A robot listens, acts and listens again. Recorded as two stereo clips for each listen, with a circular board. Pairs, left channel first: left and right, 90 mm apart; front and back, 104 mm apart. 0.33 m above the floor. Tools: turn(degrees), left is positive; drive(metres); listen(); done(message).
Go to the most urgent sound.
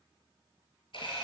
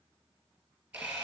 listen()
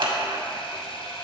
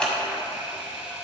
listen()
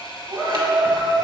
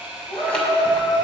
turn(degrees=10)
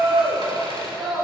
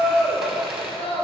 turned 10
drive(metres=1.0)
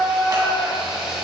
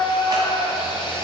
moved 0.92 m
turn(degrees=-10)
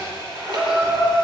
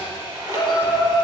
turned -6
drive(metres=1.0)
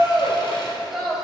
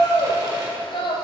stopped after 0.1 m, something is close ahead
done("I am next to the shout.")